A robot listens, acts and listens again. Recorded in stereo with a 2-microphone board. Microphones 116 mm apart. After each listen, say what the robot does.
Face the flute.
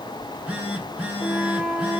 Turn 15° right.
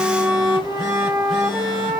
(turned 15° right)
Turn 150° right.
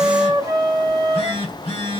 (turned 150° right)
Turn 35° right.
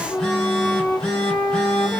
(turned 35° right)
Turn 25° left.
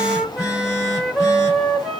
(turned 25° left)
Facing the flute.